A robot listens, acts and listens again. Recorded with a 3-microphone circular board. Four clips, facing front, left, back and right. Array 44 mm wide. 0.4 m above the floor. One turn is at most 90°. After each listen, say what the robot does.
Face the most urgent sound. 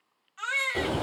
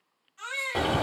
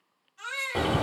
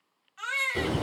Turn 40° right.
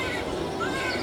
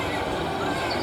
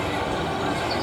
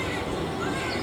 Keep listening.
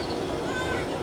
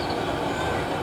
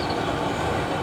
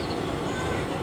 Keep listening.
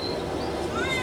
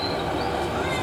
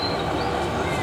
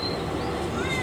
I heard a baby crying from this way, but can't make it out now.